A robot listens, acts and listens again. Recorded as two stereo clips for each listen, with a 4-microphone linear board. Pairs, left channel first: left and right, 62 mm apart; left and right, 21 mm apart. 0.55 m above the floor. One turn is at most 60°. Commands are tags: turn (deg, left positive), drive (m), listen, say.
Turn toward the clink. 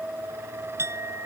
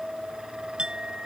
<turn deg="-45"/>
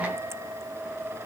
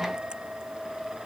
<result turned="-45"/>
<listen/>
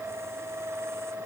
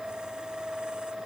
<listen/>
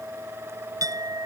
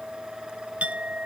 <turn deg="-60"/>
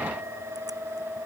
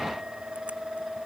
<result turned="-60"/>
<turn deg="-30"/>
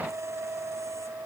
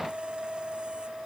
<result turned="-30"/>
<listen/>
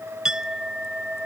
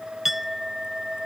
<turn deg="-10"/>
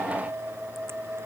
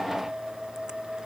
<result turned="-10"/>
<listen/>
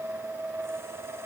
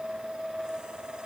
<listen/>
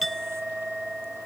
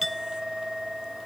<say>Found it: a clink, straight ahead.</say>